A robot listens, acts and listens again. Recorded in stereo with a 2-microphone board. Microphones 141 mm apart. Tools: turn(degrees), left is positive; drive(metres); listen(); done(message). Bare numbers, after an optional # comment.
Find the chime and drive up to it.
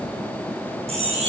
# The chime: about 45° right or 135° right.
turn(-45)
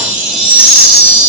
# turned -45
# So it is at 85° right.
turn(-85)
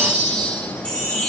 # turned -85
# The chime is now 10° left.
turn(10)
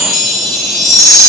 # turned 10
drive(1.0)
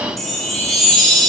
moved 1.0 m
drive(1.0)
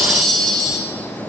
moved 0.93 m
drive(1.0)
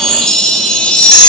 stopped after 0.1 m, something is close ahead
done("I am next to the chime.")